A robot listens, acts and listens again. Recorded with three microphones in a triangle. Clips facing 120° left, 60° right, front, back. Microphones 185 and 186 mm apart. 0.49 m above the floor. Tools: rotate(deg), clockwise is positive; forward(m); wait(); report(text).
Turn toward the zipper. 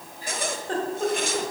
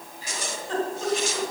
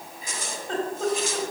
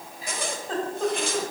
rotate(-155)
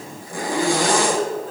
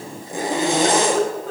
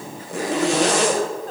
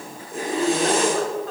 report("Facing the zipper.")